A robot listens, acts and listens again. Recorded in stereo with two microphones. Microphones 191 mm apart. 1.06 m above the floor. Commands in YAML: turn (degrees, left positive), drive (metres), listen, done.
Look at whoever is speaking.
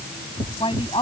turn: 25
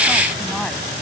listen: true
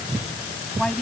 done: "Found it: a woman speaking, straight ahead."